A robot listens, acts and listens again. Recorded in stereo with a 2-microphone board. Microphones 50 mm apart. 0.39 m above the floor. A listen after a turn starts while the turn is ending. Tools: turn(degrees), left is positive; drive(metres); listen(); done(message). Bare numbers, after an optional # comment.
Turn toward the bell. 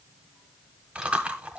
listen()
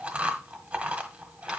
listen()
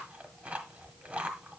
done("I can't make out a bell, only chewing.")